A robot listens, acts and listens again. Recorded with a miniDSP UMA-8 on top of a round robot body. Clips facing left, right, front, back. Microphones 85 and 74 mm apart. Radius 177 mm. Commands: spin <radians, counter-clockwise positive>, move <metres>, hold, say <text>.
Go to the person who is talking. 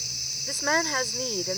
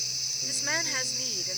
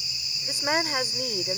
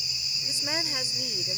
spin 0.70
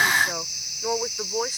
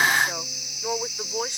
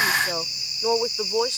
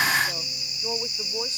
move 1.0
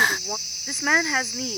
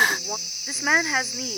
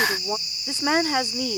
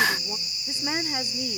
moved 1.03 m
move 1.0
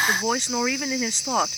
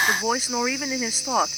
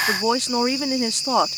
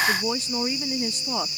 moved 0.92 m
move 1.0
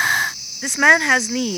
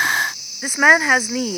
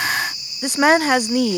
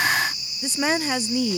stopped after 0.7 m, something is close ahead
spin -0.17
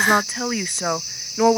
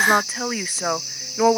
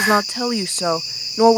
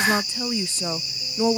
say I am next to the woman speaking.